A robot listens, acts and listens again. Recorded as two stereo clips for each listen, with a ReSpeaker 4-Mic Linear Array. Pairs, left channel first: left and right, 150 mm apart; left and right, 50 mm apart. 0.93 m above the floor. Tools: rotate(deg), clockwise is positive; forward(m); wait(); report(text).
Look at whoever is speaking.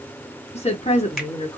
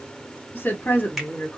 rotate(-45)
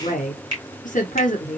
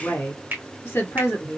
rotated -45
rotate(-80)
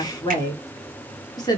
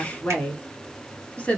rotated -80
rotate(-30)
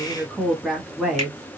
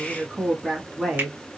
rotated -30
report("Found it: a woman speaking, straight ahead, 1 to 2 m away.")